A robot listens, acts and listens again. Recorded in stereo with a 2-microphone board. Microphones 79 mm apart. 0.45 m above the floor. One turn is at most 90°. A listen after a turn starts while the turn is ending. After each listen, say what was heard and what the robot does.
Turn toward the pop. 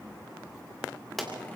Turn 30° left.
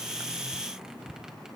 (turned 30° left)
Keep listening.
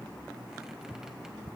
I heard a pop, but can't make it out now. It was about 30° right or 150° left.